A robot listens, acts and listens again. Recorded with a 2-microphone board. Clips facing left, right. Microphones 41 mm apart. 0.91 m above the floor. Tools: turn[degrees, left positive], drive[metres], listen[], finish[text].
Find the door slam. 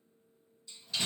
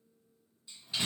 Thought: The door slam: about 20° right or 160° right.
Action: turn[-20]
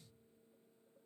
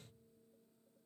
Action: listen[]
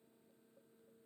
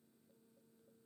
Action: finish[I heard a door slam, but can't make it out now. It was about straight ahead or 140° right.]